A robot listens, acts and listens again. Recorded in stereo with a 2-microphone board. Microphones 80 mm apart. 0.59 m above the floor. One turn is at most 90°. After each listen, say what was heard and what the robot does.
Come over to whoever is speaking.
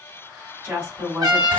The woman speaking: about 20° right or 160° right. Turn 20° right.
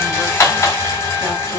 Keep listening.
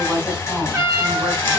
Drive 1.0 m forward.
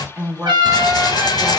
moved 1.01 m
Drive 1.0 m forward.
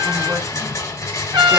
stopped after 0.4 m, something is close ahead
Keep listening.
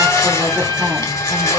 Keep listening.
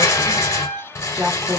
I am next to the woman speaking.